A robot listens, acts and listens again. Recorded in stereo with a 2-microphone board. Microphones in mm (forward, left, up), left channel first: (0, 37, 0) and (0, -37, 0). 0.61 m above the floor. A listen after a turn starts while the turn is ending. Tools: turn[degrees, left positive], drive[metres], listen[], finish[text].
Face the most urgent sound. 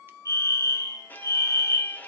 Thought: The fire alarm: about 45° left or 135° left.
Action: turn[45]
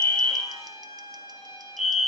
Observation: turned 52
Action: finish[Facing the fire alarm, 2 to 4 m away.]